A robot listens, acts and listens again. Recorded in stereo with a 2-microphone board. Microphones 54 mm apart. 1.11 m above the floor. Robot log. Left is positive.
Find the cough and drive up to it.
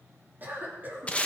note: The cough: about 35° right or 145° right.
cmd yaw -35
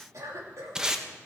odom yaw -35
note: So it is at 110° right.
cmd yaw -110
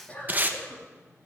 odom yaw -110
note: The cough is now 25° left.
cmd yaw +25
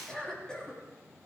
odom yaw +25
note: The cough is now 15° left.
cmd yaw +15
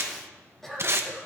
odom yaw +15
cmd fwd 1.0
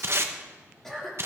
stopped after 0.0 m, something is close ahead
end: Blocked. The cough is further on, straight ahead.